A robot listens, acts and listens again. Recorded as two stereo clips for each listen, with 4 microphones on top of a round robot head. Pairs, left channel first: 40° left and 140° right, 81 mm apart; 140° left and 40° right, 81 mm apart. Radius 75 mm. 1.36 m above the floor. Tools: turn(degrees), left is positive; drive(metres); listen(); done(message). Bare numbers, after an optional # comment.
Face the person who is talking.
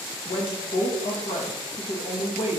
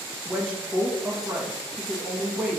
# The woman speaking: 40° left.
turn(40)
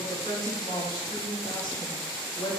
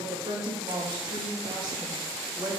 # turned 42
done("Found it: a woman speaking, straight ahead.")